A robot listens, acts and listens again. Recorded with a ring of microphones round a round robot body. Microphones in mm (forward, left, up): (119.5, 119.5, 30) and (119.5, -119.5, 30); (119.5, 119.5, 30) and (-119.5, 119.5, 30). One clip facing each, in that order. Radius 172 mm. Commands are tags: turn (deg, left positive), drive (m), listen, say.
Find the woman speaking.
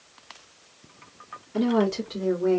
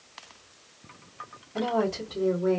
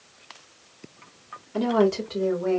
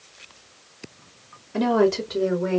<turn deg="105"/>
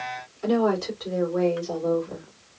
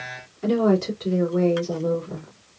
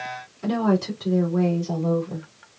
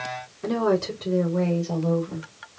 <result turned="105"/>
<turn deg="-35"/>
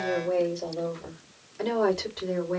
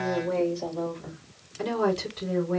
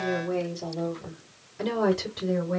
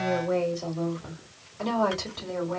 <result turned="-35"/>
<say>Found it: a woman speaking, straight ahead.</say>